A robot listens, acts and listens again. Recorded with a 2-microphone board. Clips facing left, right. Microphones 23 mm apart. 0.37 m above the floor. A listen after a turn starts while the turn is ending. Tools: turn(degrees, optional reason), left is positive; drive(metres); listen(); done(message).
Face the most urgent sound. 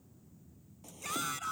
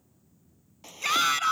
turn(degrees=-65, reason="The shout: about 65° right or 115° right.")
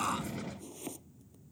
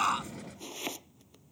listen()
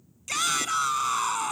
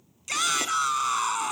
done("Found it: a shout, straight ahead.")